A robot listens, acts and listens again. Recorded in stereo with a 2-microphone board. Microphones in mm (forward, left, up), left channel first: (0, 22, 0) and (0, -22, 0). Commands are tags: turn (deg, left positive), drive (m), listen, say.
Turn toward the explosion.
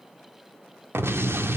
<turn deg="-90"/>
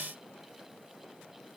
<say>I heard an explosion from this way, but can't make it out now.</say>